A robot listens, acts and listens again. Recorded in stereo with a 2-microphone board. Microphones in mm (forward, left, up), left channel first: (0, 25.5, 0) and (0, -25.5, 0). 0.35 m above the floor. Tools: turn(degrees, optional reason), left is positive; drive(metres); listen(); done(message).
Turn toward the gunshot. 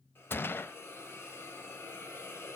turn(degrees=50, reason="The gunshot: about 50° left or 130° left.")
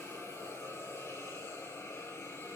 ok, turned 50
listen()
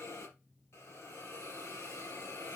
done("I heard a gunshot, but can't make it out now. It was about straight ahead or 80° left.")